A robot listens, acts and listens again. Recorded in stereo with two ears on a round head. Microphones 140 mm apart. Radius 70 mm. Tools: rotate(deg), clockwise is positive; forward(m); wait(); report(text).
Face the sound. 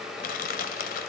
rotate(-60)
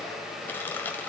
rotate(-15)
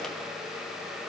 wait()
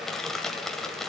report("Found it: crushing, straight ahead.")